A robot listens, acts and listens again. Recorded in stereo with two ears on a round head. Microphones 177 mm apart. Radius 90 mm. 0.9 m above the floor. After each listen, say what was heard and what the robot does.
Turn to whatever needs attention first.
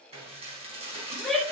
Turn 30° left.
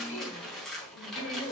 So it is at 145° left. Turn 145° left.
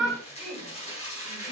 Found it: a shout, straight ahead, 2 to 4 m away.